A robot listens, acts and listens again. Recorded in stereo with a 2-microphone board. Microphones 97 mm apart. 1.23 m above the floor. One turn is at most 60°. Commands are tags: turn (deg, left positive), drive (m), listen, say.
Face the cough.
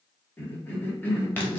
<turn deg="20"/>
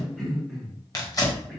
<say>Facing the cough.</say>